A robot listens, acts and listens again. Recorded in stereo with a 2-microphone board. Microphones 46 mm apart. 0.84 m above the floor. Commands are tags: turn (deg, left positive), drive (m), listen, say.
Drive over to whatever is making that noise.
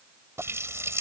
<turn deg="-90"/>
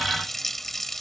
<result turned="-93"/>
<drive m="1.0"/>
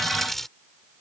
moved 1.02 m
<turn deg="10"/>
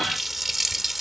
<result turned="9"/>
<drive m="1.0"/>
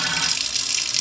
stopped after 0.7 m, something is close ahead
<say>Arrived at the running tap, straight ahead.</say>